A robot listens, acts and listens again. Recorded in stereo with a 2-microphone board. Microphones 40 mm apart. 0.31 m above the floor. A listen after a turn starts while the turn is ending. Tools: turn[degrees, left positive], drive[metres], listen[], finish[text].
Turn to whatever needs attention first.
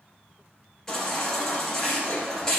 Action: turn[30]
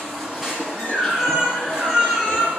Thought: So it is at 15° right.
Action: turn[-15]
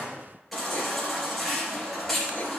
Action: finish[Facing the baby crying, 2 to 4 m away.]